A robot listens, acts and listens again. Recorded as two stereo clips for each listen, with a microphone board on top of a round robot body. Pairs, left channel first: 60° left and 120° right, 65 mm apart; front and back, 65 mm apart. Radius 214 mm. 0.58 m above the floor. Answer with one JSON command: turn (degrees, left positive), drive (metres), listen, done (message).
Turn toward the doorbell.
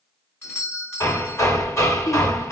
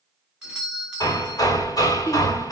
{"turn": 110}
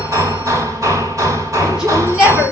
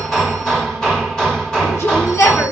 {"listen": true}
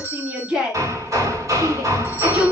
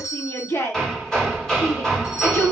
{"turn": 10}
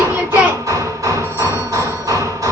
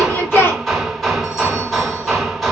{"listen": true}
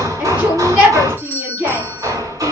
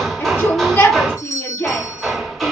{"done": "Facing the doorbell, 2 to 4 m away."}